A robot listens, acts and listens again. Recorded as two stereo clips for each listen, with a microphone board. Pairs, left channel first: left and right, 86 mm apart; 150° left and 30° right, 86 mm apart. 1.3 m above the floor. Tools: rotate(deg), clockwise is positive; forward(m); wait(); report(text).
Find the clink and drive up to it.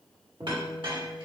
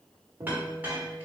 rotate(100)
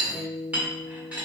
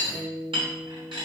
rotate(20)
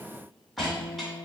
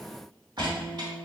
forward(1.0)
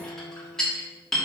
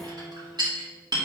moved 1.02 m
forward(1.0)
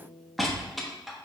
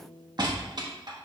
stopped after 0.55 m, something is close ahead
report("I am next to the clink.")